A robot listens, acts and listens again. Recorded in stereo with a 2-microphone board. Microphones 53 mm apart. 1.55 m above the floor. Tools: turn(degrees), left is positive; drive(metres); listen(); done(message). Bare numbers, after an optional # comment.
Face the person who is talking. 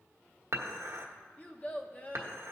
# The child speaking: about 30° left or 150° left.
turn(30)
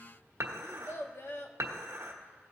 # So it is at 125° left.
turn(125)
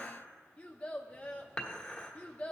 # The child speaking is now 30° left.
turn(30)
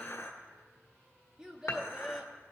# The child speaking is now 15° right.
turn(-15)
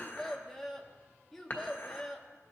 done("Facing the child speaking.")